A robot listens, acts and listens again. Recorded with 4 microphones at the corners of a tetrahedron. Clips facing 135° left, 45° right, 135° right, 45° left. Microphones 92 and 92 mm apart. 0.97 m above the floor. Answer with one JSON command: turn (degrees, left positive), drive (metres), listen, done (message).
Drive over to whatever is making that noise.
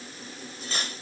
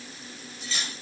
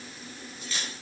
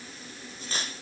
{"turn": 90}
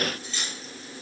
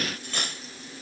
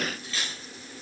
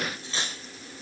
{"turn": -15}
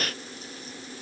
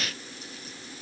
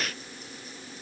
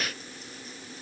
{"listen": true}
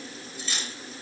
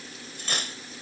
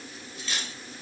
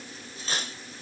{"turn": -10}
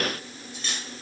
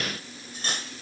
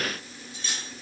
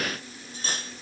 {"drive": 1.0}
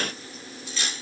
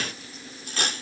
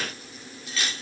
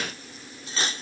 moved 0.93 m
{"turn": -10}
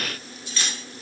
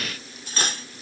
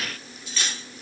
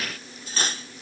{"drive": 1.0}
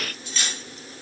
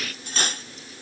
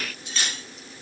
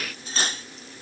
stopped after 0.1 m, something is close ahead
{"done": "I am next to the cutlery clinking."}